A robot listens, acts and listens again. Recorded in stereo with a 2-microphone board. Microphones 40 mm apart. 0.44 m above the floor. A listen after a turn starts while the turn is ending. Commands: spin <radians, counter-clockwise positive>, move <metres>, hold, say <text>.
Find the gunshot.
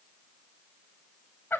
hold
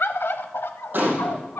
spin -0.96
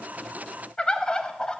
hold
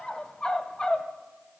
say I heard a gunshot, but can't make it out now. It was about straight ahead or 70° right.